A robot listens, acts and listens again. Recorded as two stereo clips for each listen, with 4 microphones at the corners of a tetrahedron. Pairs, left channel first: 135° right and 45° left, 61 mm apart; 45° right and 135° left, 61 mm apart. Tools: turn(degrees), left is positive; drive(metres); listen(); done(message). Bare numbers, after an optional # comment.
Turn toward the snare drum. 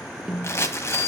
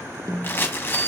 # The snare drum: 130° left.
turn(130)
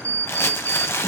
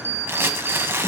listen()
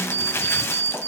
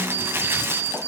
listen()
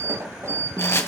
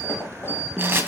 # The snare drum is now 45° left.
turn(45)
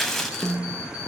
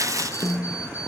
done("Found it: a snare drum, straight ahead, 1 to 2 m away.")